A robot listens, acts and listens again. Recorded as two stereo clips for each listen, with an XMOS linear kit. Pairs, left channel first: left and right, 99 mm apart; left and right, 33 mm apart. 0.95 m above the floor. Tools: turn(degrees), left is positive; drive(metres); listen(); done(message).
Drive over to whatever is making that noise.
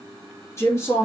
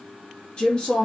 turn(degrees=30)
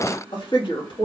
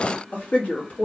turn(degrees=120)
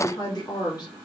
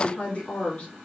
turn(degrees=45)
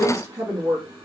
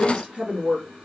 turn(degrees=-35)
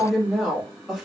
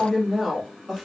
drive(metres=1.0)
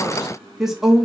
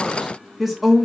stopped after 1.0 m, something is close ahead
done("Arrived at the woman speaking, straight ahead.")